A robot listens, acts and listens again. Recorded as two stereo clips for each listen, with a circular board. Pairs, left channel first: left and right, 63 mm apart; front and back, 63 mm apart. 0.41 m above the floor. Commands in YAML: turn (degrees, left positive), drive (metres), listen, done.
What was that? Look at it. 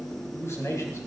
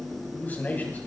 turn: 60
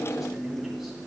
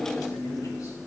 listen: true
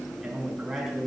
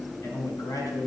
done: "Found it: a man speaking, straight ahead."